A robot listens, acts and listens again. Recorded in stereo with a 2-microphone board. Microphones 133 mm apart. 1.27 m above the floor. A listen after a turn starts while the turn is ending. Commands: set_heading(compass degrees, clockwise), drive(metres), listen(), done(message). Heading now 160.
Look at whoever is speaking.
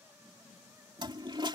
listen()
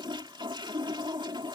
listen()
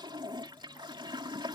done("I can't make out anyone speaking to turn to.")